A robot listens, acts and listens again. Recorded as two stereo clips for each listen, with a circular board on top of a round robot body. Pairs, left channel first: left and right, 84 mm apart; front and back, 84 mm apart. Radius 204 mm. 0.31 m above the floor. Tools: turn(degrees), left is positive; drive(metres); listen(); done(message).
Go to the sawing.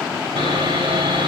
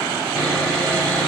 turn(degrees=-80)
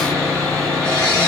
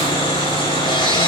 turn(degrees=10)
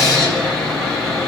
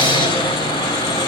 drive(metres=1.0)
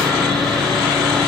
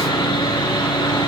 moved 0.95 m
drive(metres=1.0)
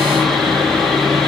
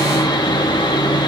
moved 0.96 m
drive(metres=1.0)
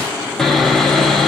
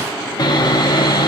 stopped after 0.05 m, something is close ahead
done("Arrived at the sawing, straight ahead.")